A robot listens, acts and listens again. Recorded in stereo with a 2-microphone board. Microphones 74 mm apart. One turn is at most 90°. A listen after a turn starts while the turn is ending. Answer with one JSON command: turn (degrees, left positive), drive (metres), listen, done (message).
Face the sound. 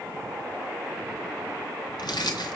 {"turn": 70}
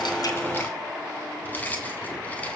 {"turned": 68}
{"turn": 25}
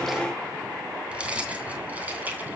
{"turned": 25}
{"turn": -20}
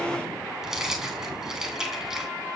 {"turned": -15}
{"done": "Facing the keys jangling, 2 to 4 m away."}